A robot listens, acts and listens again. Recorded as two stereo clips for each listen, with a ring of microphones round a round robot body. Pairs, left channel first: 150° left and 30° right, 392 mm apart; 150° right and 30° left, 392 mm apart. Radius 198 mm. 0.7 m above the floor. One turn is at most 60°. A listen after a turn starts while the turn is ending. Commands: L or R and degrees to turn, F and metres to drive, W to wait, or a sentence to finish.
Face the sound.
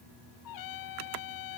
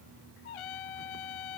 R60
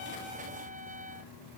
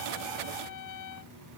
R60
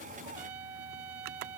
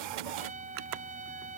R45
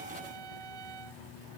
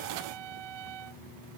Facing the trumpet.